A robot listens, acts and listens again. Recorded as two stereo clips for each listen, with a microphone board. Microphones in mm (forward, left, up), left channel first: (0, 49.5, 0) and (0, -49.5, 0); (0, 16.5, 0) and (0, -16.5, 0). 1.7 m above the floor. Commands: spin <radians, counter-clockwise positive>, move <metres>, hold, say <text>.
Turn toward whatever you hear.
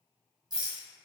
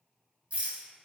spin -0.79
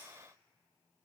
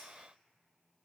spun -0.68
hold
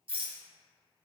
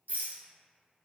spin -1.57
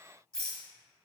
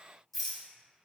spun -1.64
say Facing the rattle, under 1 m away.